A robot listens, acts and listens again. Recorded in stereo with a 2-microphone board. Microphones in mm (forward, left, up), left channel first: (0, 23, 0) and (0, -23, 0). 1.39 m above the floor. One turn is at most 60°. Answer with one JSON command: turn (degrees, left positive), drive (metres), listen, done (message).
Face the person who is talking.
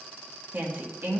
{"turn": -45}
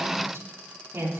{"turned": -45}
{"turn": -60}
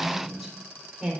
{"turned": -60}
{"turn": -10}
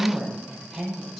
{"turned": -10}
{"done": "Found it: a woman speaking, straight ahead."}